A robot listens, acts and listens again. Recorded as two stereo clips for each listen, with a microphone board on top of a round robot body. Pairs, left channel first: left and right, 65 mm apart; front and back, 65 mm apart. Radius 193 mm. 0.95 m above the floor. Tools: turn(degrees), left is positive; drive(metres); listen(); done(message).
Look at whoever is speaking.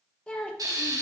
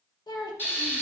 turn(degrees=15)
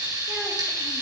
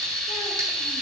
listen()
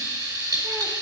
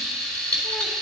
listen()
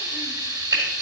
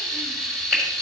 done("Facing where the child speaking came from. I can't hear it now.")